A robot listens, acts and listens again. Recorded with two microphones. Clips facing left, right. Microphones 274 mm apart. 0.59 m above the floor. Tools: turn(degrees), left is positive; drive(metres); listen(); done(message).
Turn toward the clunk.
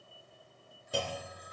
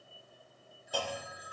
turn(degrees=25)
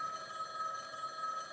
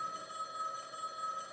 listen()
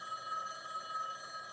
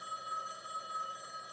done("I heard a clunk, but can't make it out now. It was about straight ahead or 130° left.")